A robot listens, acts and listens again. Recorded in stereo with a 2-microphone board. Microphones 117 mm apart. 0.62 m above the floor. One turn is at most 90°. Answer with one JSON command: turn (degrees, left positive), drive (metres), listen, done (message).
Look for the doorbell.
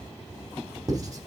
{"listen": true}
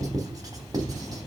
{"listen": true}
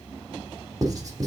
{"done": "I can't make out a doorbell to turn to."}